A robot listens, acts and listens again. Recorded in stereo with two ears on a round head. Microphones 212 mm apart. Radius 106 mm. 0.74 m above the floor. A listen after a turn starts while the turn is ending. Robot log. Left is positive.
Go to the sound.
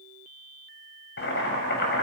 note: The boiling: about 50° left or 130° left.
cmd yaw +50
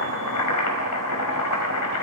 note: So it is at 80° left.
cmd yaw +80
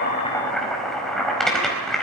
cmd fwd 1.0
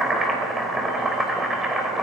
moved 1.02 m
cmd fwd 1.0
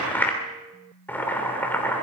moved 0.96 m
note: The boiling is now 10° left.
cmd yaw +10
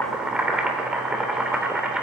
cmd fwd 1.0
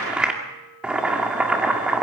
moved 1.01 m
cmd fwd 1.0
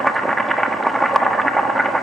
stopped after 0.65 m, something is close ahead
end: Arrived at the boiling, straight ahead.